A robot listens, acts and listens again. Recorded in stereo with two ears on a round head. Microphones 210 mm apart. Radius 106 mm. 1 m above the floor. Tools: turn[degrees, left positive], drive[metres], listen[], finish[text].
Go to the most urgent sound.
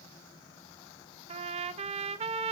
Action: listen[]
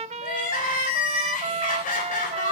Thought: The crying: about 40° left or 140° left.
Action: turn[40]
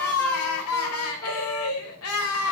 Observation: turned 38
Thought: So it is at 105° left.
Action: turn[105]
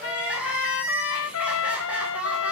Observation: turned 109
Action: drive[1.0]
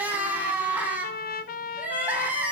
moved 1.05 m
Action: drive[1.0]
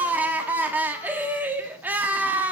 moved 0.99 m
Thought: The crying is now 10° right.
Action: turn[-10]
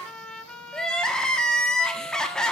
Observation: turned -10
Action: drive[1.0]
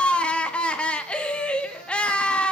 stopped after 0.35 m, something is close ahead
Action: finish[Arrived at the crying, straight ahead.]